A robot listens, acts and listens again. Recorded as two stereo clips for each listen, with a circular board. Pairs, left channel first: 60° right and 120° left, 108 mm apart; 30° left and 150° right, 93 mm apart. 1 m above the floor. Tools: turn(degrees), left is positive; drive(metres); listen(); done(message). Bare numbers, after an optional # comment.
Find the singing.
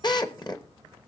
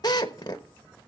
listen()
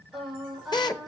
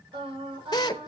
# The singing: 150° right.
turn(-150)
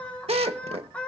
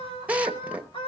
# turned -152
# The singing is now 20° left.
turn(20)
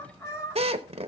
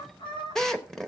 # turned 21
done("Facing the singing, over 4 m away.")